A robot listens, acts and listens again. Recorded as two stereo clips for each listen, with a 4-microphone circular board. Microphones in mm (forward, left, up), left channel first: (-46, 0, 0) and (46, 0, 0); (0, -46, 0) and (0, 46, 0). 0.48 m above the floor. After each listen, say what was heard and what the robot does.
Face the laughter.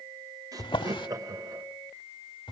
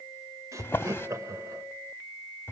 The laughter: 40° left. Turn 40° left.
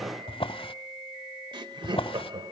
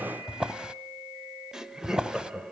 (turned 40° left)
Facing the laughter.